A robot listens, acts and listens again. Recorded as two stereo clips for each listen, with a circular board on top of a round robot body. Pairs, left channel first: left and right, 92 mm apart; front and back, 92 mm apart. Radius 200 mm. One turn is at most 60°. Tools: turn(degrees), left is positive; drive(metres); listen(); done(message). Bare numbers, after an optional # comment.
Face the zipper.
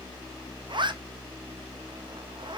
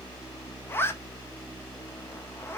# The zipper: 65° right.
turn(-60)
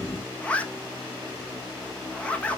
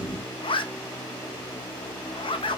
# The zipper is now 15° left.
turn(15)
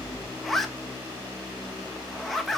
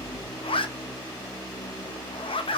done("Found it: a zipper, straight ahead, under 1 m away.")